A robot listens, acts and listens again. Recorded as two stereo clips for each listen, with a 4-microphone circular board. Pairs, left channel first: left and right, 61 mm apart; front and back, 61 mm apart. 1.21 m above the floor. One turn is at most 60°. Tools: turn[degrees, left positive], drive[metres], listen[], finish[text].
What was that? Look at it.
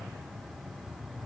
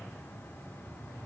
Action: listen[]
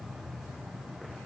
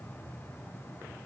Action: listen[]
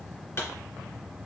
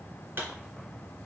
Thought: The pop: 135° left.
Action: turn[60]
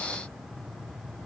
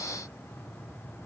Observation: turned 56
Thought: Nothing new. It was at 75° left.
Action: turn[60]
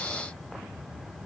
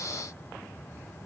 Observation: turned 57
Thought: Nothing new. It was at 20° left.
Action: turn[20]
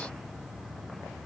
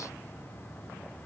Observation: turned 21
Action: finish[I heard a pop from this way, but can't make it out now.]